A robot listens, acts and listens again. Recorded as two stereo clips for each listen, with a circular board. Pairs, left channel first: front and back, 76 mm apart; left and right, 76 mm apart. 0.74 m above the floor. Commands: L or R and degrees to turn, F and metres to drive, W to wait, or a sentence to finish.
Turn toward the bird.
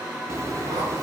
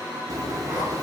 R130
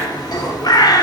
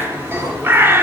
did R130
R30
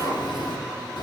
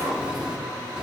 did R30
R10
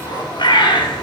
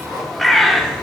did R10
Found it: a bird, straight ahead.